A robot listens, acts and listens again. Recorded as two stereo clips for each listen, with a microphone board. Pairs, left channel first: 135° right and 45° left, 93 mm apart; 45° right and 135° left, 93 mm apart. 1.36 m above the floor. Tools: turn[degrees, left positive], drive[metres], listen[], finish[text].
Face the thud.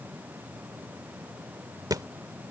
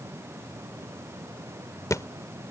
Action: finish[Found it: a thud, straight ahead.]